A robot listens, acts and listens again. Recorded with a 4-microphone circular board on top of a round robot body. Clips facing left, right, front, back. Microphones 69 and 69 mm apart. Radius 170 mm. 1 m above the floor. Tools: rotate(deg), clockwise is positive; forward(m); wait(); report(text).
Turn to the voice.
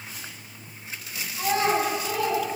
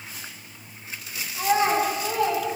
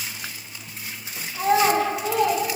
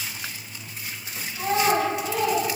rotate(35)
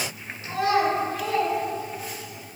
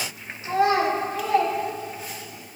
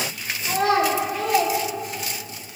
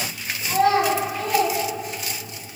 rotate(40)
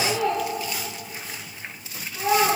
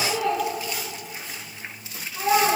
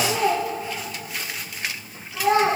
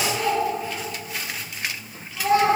rotate(10)
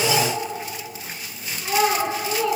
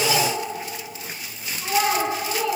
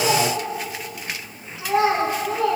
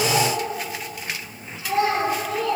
report("Facing the child speaking, 2 to 4 m away.")